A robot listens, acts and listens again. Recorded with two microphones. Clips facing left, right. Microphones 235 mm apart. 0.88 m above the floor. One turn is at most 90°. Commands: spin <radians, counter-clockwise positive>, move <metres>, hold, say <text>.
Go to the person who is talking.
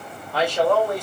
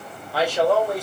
spin -0.52
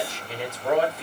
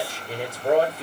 spin -1.57
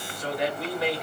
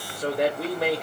spin -0.96
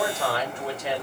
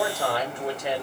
spin -0.26
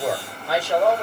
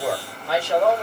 move 1.0
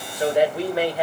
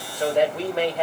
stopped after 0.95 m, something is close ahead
spin 0.17
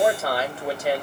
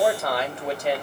say I am next to the man speaking.